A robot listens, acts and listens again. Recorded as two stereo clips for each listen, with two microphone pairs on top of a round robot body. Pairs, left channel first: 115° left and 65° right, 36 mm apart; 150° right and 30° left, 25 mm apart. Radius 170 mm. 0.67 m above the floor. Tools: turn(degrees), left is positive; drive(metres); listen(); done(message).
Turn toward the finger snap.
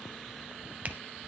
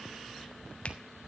listen()
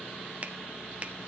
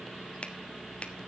turn(degrees=-110)
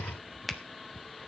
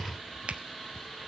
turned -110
turn(degrees=30)
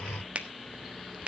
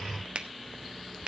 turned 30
done("Found it: a finger snap, straight ahead, 1 to 2 m away.")